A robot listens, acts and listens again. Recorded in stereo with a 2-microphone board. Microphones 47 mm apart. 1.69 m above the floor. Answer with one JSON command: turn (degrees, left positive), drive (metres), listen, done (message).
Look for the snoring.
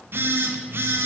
{"listen": true}
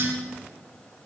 {"listen": true}
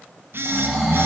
{"turn": 30}
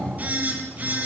{"listen": true}
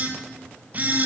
{"listen": true}
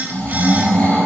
{"turn": 150}
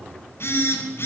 {"listen": true}
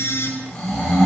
{"turn": 10}
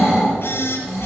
{"done": "Facing the snoring."}